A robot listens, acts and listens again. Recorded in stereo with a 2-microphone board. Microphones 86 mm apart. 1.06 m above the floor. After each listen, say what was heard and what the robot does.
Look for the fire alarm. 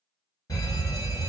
The fire alarm: about 45° left or 135° left. Turn 45° left.
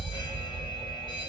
So it is at 85° left. Turn 85° left.
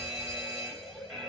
Found it: a fire alarm, straight ahead.